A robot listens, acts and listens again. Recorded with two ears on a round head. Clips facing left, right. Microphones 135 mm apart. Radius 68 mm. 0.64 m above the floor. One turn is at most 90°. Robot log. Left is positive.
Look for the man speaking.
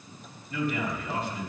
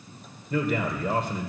note: The man speaking: about 45° right or 135° right.
cmd yaw -45
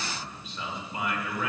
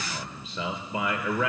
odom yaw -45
note: So it is at 90° right.
cmd yaw -90
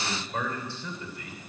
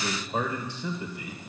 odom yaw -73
note: The man speaking is now 15° right.
cmd yaw -15
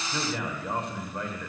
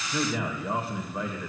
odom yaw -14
end: Found it: a man speaking, straight ahead, 2 to 4 m away.